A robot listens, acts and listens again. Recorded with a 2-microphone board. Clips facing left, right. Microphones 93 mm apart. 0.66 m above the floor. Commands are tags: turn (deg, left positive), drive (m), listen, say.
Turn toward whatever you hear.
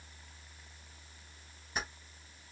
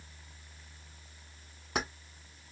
<turn deg="-70"/>
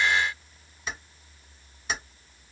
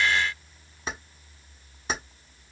<turn deg="-35"/>
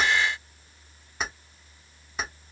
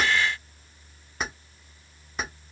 <say>Facing the keys jangling.</say>